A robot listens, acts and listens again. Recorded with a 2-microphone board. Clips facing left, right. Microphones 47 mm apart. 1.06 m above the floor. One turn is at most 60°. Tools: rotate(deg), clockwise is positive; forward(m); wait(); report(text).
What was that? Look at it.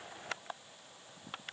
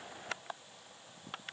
wait()
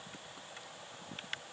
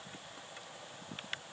wait()
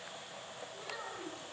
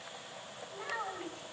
rotate(30)
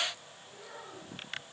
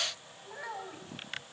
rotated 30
rotate(60)
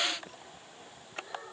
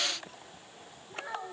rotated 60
rotate(60)
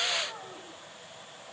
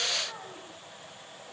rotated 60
report("Facing the child speaking.")